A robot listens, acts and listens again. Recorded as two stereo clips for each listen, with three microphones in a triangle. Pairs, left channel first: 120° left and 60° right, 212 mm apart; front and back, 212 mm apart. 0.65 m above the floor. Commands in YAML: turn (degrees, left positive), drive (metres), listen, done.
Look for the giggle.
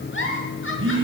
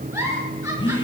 turn: 100
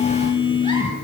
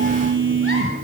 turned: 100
listen: true
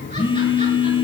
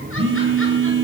listen: true
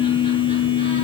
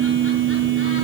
done: "I heard a giggle from this way, but can't make it out now."